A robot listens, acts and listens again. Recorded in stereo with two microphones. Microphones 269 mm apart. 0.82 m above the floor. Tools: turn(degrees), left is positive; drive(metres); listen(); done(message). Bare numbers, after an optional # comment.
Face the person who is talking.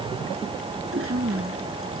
turn(-90)
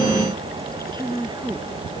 # So it is at 15° right.
turn(-15)
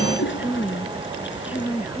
done("Facing the woman speaking.")